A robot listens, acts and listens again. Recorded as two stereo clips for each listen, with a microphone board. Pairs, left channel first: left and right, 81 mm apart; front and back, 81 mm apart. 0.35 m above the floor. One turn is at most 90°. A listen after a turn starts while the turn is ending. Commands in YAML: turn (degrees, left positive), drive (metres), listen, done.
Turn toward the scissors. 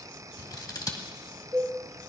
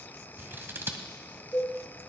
turn: 90
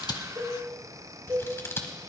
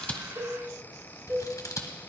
turn: 35
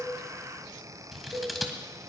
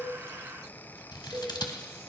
done: "Found it: scissors, straight ahead, 1 to 2 m away."